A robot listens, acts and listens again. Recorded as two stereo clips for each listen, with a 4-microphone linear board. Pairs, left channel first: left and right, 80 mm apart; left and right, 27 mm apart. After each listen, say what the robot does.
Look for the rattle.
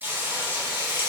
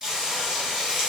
Keep listening.
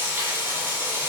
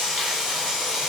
Keep listening.
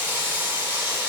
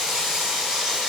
I can't make out a rattle to turn to.